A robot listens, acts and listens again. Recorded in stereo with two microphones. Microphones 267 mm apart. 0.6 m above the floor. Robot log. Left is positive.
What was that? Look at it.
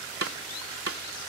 note: The snare drum: about 55° right or 125° right.
cmd yaw -55
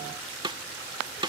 note: So it is at 20° right.
cmd yaw -20
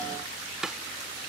end: Found it: a snare drum, straight ahead.